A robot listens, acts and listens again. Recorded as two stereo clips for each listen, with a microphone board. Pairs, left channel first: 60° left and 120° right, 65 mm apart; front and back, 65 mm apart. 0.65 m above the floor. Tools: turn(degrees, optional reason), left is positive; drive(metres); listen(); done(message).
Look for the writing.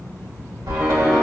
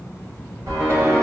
turn(degrees=170, reason="The writing: 170° left.")
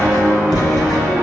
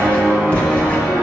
turn(degrees=70, reason="The writing is now 70° left.")
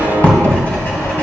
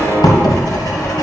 done("Facing the writing, 2 to 4 m away.")